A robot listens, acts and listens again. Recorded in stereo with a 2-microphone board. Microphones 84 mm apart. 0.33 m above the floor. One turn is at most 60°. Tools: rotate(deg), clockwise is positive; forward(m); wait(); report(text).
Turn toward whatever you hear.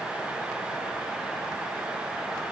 wait()
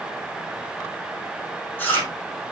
rotate(-25)
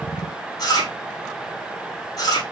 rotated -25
rotate(-60)
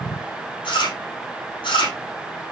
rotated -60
rotate(-60)
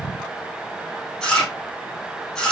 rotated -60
rotate(-10)
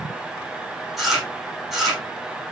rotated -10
report("Found it: chewing, straight ahead.")